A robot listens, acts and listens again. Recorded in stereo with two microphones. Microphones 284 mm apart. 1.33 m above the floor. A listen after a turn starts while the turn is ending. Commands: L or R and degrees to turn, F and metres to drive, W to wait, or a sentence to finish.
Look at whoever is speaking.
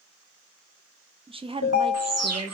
R20
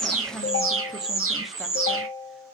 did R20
W
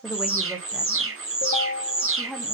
Found it: a woman speaking, straight ahead, under 1 m away.